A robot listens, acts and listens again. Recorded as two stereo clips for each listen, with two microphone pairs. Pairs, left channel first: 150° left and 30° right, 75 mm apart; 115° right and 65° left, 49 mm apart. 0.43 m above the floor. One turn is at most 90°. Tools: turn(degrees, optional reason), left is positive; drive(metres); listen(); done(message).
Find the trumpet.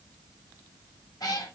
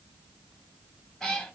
listen()
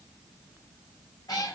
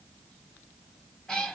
listen()
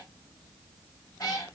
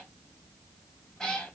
done("I can't make out a trumpet to turn to.")